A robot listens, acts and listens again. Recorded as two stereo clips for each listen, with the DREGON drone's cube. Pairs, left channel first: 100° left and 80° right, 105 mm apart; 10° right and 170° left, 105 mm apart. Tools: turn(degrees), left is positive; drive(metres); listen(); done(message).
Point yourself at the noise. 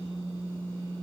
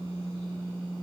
listen()
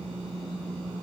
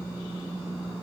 listen()
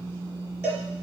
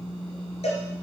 done("Facing the cowbell, 2 to 4 m away.")